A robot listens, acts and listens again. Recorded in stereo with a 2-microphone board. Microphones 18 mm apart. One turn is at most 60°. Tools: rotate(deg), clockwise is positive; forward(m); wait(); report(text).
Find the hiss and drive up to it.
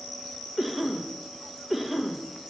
wait()
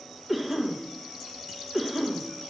wait()
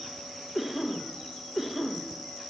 report("I can't make out a hiss to turn to.")